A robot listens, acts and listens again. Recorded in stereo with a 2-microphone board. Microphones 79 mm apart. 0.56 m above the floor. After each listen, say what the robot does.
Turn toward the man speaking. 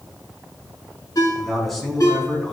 Turn 30° left.
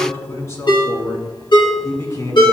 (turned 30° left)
Turn 140° left.
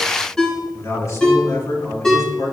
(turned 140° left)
Turn 40° left.
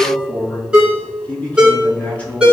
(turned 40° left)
Turn 20° left.
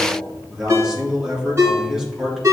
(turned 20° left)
Found it: a man speaking, straight ahead.